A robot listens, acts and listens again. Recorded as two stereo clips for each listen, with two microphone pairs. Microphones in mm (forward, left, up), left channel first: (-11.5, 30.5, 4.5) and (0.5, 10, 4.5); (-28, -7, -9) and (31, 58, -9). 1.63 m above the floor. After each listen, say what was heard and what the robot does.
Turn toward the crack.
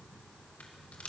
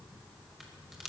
The crack: 135° left. Turn 135° left.
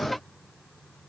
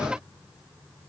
Facing where the crack came from. I can't hear it now.